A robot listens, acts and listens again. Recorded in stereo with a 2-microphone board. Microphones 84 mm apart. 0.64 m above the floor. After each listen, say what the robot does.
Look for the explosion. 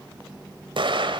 Turn 90° right.
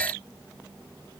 I heard an explosion from this way, but can't make it out now.